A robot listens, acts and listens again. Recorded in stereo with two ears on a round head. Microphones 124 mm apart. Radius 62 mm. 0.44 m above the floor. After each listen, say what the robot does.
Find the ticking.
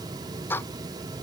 Turn 15° left.
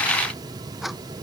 Facing the ticking.